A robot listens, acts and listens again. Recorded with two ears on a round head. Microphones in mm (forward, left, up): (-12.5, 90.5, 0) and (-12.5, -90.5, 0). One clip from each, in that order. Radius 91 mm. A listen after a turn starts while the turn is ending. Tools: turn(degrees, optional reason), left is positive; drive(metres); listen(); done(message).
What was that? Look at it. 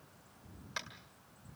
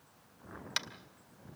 turn(degrees=-60, reason="The tapping: about 60° right or 120° right.")
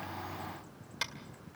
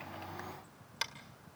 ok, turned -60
done("Facing the tapping.")